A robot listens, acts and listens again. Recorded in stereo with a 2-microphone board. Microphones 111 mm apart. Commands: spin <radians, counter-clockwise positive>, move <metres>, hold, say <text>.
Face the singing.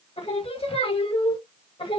spin 0.96
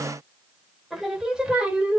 spin -0.26
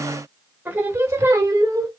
spin -0.52
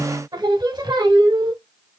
spin -0.70
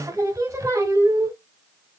spin -0.44
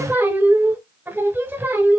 spin -0.26
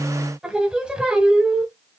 say Facing the singing.